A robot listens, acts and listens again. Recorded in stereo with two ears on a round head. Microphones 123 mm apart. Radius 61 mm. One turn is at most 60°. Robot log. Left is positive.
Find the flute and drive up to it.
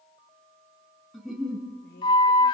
note: The flute: about 35° left or 145° left.
cmd yaw +35
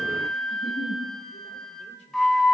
cmd fwd 1.0
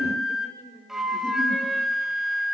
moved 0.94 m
cmd fwd 1.0
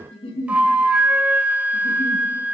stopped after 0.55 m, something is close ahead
note: The flute is now 15° right.
cmd yaw -15
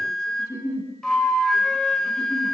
end: Arrived at the flute, straight ahead.